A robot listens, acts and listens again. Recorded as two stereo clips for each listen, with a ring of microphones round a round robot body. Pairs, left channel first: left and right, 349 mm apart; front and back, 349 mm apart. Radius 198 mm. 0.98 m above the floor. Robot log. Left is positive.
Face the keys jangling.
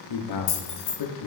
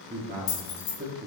note: The keys jangling: 40° left.
cmd yaw +40
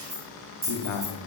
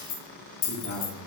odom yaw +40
note: The keys jangling is now 20° right.
cmd yaw -20
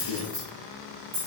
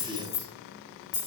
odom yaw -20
note: The keys jangling is now 20° right.
cmd yaw -20
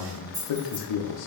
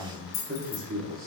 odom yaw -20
note: The keys jangling is now 10° right.
cmd yaw -10
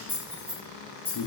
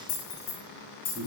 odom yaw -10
end: Facing the keys jangling.